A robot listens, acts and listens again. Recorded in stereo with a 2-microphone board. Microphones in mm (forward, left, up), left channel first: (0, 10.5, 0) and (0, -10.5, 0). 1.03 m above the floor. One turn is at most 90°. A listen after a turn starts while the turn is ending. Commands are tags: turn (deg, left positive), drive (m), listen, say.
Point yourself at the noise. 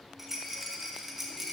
<turn deg="-30"/>
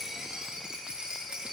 <turn deg="-90"/>
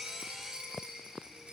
<turn deg="-50"/>
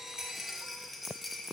<say>Found it: a rattle, straight ahead.</say>